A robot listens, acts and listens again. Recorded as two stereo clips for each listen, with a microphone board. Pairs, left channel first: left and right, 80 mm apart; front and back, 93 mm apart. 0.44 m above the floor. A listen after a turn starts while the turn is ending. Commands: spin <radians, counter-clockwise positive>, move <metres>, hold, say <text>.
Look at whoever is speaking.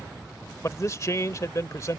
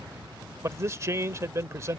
spin 2.27
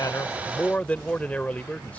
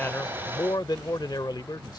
spin 0.35
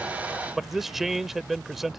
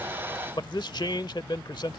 say Found it: a man speaking, straight ahead.